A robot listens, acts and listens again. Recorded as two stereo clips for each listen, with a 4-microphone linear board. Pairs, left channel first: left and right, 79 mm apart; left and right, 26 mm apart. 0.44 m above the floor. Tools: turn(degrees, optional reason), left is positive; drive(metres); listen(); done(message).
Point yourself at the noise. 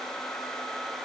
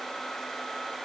listen()
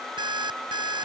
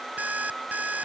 turn(degrees=-70, reason="The alarm clock: about 70° right or 110° right.")
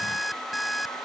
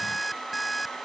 done("Found it: an alarm clock, straight ahead.")